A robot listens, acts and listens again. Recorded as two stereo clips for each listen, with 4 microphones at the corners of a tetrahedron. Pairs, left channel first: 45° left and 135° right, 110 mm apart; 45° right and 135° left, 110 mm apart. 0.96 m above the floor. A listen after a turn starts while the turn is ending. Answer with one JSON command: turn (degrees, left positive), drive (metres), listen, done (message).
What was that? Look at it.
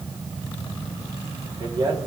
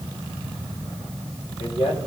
{"turn": -75}
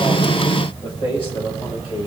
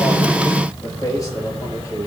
{"turn": 15}
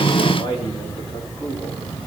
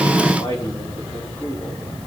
{"done": "Found it: a man speaking, straight ahead."}